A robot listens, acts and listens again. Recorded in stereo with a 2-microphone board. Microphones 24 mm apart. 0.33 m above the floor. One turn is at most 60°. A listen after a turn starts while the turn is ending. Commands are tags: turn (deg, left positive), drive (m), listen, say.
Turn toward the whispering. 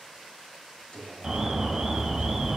<turn deg="30"/>
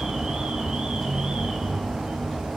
<listen/>
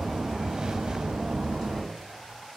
<listen/>
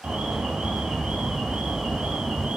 <say>I heard whispering, but can't make it out now. It was about straight ahead or 120° left.</say>